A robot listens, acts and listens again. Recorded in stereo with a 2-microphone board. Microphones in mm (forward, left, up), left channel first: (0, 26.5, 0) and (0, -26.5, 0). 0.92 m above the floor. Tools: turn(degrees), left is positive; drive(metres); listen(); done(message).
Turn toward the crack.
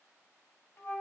listen()
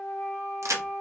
turn(degrees=-65)
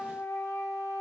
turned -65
listen()
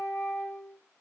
done("I heard a crack, but can't make it out now. It was about straight ahead or 50° right.")